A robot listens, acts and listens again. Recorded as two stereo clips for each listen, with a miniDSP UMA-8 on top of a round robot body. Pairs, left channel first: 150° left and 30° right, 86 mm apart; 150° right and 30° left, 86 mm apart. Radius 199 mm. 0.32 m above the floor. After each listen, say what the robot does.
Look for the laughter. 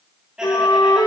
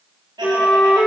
Turn 50° left.
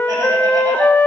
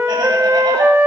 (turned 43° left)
Turn 10° left.
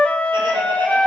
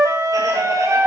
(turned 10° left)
Keep listening.
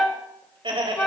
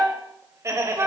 Turn 25° right.
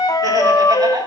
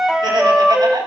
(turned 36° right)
Found it: laughter, straight ahead, 2 to 4 m away.